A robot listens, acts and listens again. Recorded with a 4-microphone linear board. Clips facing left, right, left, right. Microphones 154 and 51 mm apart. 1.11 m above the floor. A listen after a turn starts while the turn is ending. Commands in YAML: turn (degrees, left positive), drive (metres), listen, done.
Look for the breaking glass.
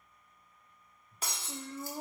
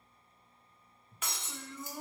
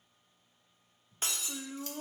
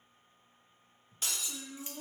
turn: 35
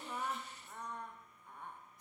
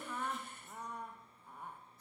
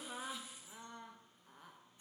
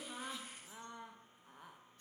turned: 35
listen: true
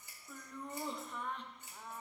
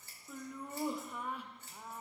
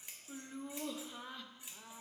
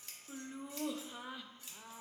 done: "I heard breaking glass, but can't make it out now. It was about straight ahead or 110° left."